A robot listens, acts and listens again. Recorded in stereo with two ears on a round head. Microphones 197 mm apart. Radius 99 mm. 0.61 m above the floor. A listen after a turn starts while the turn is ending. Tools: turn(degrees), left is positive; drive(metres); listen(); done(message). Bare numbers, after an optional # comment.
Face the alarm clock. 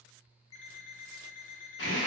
# The alarm clock: about 60° left or 120° left.
turn(60)
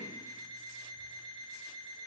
done("Found it: an alarm clock, straight ahead.")